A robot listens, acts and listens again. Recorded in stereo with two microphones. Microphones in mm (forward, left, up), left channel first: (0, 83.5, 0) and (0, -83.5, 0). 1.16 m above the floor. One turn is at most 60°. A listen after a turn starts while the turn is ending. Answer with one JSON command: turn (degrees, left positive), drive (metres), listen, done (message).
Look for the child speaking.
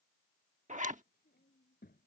{"turn": 60}
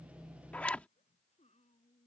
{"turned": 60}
{"turn": 40}
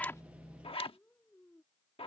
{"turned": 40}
{"done": "Found it: a child speaking, straight ahead."}